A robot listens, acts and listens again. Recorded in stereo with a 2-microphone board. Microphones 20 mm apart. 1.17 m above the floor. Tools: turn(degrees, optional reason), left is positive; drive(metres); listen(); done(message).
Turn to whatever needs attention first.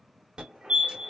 turn(degrees=-55, reason="The fire alarm: about 55° right or 125° right.")
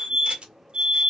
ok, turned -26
turn(degrees=-45, reason="So it is at 45° right.")
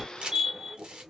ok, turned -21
turn(degrees=-25, reason="The fire alarm is now 25° right.")
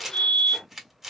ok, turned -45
turn(degrees=20, reason="The fire alarm is now 20° left.")
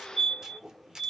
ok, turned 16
done("Found it: a fire alarm, straight ahead.")